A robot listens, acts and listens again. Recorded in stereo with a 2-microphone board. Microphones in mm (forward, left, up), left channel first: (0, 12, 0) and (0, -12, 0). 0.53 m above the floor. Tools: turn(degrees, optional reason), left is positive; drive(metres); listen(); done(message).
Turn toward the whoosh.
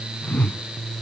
turn(degrees=70, reason="The whoosh: about 70° left or 110° left.")
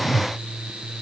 done("Facing the whoosh.")